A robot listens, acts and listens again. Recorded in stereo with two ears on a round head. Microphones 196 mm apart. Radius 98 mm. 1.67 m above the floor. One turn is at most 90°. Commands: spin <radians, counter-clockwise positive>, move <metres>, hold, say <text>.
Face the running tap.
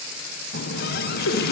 spin 0.79
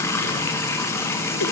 spin 0.26
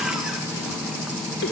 say Found it: a running tap, straight ahead.